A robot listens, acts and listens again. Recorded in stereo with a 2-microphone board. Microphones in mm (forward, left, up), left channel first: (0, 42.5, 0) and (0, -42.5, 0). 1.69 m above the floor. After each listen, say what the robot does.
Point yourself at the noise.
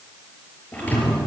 Turn 20° left.
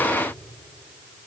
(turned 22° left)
Keep listening.
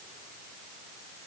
I heard a thud, but can't make it out now. It was about 5° right or 140° left.